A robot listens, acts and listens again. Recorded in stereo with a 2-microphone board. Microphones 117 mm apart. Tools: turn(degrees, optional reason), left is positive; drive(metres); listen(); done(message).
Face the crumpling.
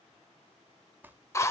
turn(degrees=-15, reason="The crumpling: about 15° right or 165° right.")
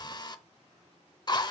listen()
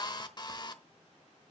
listen()
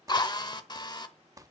turn(degrees=-150, reason="So it is at 150° right.")
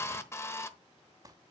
turn(degrees=-35, reason="The crumpling is now 35° right.")
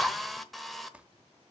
turn(degrees=-10, reason="The crumpling is now 10° right.")
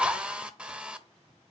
listen()
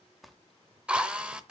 done("Facing the crumpling, under 1 m away.")